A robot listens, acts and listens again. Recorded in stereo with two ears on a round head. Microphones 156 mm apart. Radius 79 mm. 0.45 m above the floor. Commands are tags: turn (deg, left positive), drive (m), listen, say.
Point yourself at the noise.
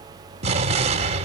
<turn deg="-35"/>
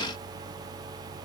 <listen/>
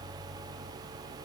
<say>I heard an explosion, but can't make it out now. It was about straight ahead or 110° right.</say>